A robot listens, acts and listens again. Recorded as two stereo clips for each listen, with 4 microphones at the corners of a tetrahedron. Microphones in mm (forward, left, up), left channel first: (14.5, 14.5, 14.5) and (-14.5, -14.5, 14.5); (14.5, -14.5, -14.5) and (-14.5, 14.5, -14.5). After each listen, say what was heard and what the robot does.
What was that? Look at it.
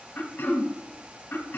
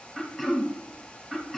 The throat clearing: 50° left. Turn 50° left.
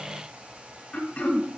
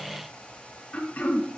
Found it: throat clearing, straight ahead, 1 to 2 m away.